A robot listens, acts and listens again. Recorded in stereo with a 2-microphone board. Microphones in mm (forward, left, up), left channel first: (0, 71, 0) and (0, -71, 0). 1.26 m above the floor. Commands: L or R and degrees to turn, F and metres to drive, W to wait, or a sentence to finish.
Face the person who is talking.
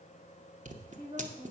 R25
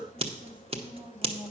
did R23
R15
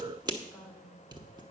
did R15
Facing the woman speaking.